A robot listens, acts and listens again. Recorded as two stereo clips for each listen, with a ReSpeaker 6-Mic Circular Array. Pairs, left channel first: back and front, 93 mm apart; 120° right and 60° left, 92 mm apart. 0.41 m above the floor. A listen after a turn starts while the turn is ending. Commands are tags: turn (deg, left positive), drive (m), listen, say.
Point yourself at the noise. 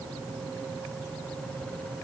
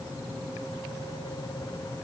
<listen/>
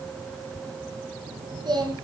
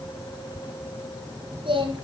<turn deg="40"/>
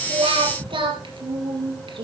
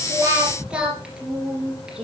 <turn deg="-20"/>
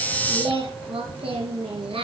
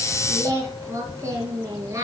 <say>Found it: singing, straight ahead, 2 to 4 m away.</say>